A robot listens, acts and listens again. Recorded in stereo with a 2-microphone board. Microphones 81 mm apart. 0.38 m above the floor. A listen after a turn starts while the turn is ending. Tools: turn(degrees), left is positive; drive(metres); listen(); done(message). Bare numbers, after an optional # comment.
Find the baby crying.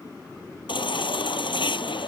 turn(90)
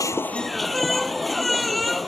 done("Found it: a baby crying, straight ahead.")